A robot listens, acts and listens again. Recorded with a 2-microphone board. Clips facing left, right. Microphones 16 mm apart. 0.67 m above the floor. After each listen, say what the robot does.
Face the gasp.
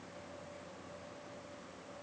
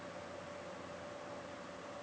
Keep listening.
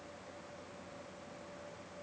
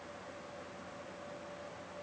Keep listening.
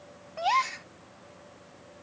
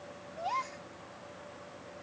Turn 90° left.
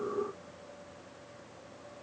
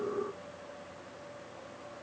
I heard a gasp from this way, but can't make it out now.